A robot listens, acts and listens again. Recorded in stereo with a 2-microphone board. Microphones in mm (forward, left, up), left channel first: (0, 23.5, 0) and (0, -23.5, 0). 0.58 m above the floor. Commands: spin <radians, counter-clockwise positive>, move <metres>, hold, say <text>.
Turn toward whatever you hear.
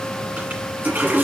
spin -0.70
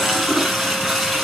say Facing the toilet flushing.